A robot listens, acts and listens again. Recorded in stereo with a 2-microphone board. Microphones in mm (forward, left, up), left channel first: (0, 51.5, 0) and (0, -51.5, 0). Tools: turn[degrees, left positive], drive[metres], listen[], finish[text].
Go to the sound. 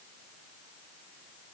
Action: listen[]
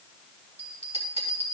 Action: turn[-90]
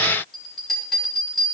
Action: drive[1.0]
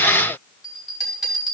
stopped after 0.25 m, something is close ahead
Action: finish[Something is in my way. I am facing the bell but have not reached it.]